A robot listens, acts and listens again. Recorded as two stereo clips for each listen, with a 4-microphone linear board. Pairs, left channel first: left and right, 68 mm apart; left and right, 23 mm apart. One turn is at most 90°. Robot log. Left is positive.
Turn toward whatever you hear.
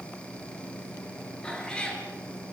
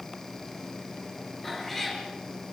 cmd yaw +30
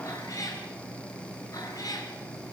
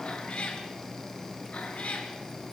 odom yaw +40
note: So it is at 120° left.
cmd yaw +90
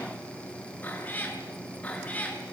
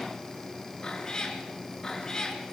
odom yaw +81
note: The cat meowing is now 20° left.
cmd yaw +20
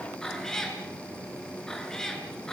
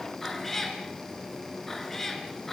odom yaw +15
note: The cat meowing is now 10° left.
cmd yaw +10
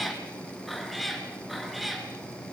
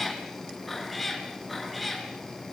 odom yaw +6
end: Found it: a cat meowing, straight ahead, over 4 m away.